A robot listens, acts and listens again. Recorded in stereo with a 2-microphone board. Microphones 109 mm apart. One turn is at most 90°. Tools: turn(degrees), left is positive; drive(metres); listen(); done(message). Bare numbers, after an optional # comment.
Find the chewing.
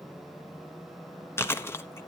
# The chewing: about 20° left or 160° left.
turn(20)
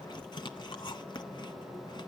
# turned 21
# So it is at 140° left.
turn(90)
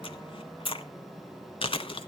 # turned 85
# The chewing is now 55° left.
turn(55)
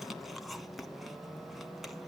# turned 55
done("Facing the chewing, 1 to 2 m away.")